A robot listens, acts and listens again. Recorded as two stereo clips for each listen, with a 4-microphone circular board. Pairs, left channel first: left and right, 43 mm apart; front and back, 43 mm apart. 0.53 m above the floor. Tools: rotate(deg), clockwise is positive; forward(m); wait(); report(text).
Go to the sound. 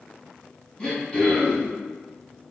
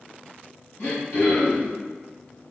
rotate(-30)
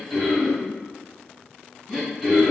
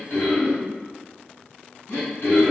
forward(1.0)
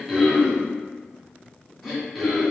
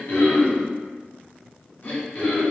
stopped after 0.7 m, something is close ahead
report("I am next to the throat clearing.")